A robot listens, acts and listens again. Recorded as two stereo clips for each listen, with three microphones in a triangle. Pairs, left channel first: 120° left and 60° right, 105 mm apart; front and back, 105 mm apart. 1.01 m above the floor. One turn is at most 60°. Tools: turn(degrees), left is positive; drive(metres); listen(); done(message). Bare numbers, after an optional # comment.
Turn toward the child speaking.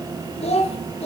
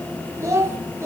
# The child speaking: 115° left.
turn(60)
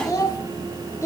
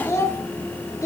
# The child speaking is now 55° left.
turn(55)
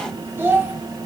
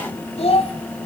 # The child speaking is now 10° left.
turn(10)
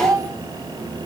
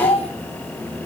done("Found it: a child speaking, straight ahead.")